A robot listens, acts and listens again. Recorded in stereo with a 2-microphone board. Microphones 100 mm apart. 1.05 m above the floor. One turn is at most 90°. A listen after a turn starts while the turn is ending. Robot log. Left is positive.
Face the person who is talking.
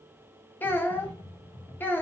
note: The child speaking: about 20° left or 160° left.
cmd yaw +20
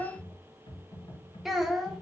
end: Facing the child speaking, under 1 m away.